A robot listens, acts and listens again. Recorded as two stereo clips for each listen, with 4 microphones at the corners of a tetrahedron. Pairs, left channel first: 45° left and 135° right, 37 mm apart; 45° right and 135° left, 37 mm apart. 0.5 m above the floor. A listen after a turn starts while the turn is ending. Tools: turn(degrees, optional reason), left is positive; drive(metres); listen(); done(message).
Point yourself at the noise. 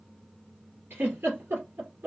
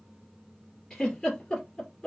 turn(degrees=-120, reason="The giggle: 120° right.")
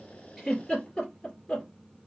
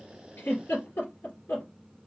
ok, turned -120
turn(degrees=-30, reason="The giggle is now 30° right.")
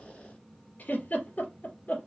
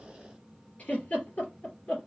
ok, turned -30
done("Found it: a giggle, straight ahead.")